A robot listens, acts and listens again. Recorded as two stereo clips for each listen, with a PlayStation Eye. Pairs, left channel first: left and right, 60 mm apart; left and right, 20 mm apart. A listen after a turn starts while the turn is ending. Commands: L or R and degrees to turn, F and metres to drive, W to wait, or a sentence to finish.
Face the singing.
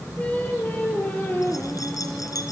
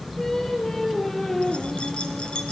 L30
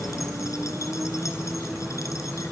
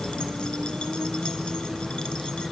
W
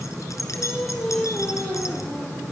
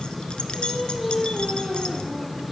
L20
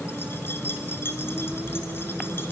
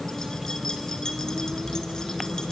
W
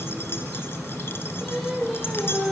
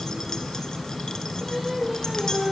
Facing the singing.